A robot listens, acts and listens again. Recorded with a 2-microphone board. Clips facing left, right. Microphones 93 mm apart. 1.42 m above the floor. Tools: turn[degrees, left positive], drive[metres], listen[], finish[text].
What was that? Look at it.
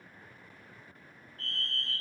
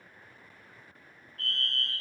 Thought: The fire alarm: about 75° right or 105° right.
Action: turn[-75]
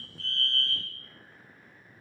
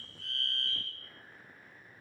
Action: finish[Facing the fire alarm, 2 to 4 m away.]